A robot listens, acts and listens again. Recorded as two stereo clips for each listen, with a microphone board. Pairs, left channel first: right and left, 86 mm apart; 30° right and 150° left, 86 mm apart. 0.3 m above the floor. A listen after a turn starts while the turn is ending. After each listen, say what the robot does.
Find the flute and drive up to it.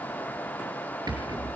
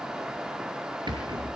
Keep listening.
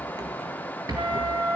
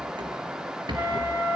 Turn 85° left.
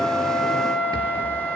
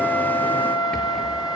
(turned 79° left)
Turn 10° left.
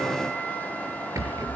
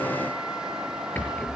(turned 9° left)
Keep listening.
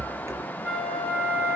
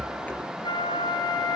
Drive 1.0 m forward.
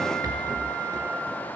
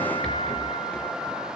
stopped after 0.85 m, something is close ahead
Keep listening.
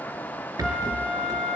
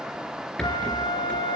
Something is in my way. I am facing the flute but have not reached it.